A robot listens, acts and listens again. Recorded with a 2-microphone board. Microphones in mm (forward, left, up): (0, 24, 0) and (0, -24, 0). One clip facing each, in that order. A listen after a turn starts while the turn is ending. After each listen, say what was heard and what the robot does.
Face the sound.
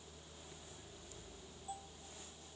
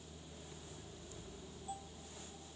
Keep listening.
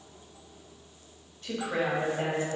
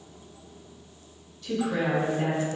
The woman speaking: about 35° left or 145° left. Turn 35° left.
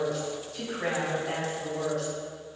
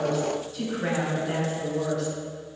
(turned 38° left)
So it is at 115° left. Turn 115° left.
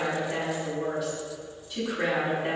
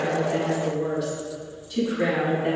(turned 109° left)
Found it: a woman speaking, straight ahead.